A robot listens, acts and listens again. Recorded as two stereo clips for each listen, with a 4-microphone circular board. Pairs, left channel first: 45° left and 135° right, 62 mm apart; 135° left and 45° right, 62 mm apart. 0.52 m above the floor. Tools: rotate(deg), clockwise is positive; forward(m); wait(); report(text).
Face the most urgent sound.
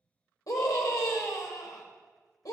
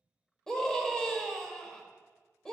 rotate(-55)
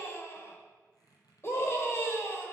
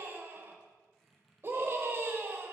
report("Facing the scream, 1 to 2 m away.")